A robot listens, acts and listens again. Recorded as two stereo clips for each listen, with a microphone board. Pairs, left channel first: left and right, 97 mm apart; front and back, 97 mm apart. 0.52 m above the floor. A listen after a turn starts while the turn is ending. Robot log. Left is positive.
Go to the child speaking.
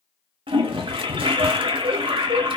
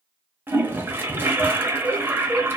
cmd idle
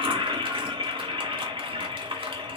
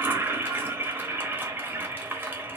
cmd idle
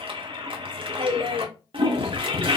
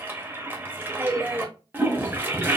end: I can't make out a child speaking, only a toilet flushing.